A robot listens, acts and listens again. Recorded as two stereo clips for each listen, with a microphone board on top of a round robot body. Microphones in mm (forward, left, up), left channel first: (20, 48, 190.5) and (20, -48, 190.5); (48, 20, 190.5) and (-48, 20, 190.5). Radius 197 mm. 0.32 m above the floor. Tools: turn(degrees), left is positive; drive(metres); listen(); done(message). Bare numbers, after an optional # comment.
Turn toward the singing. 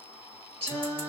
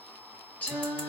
# The singing: 75° right.
turn(-75)
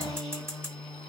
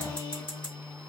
# The singing is now 10° left.
turn(10)
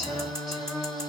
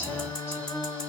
done("Facing the singing.")